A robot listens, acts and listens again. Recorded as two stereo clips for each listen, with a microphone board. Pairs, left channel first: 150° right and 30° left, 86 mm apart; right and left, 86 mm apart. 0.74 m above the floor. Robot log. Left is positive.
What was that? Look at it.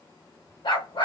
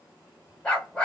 note: The dog barking: 170° right.
cmd yaw -170
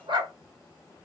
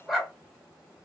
end: Found it: a dog barking, straight ahead.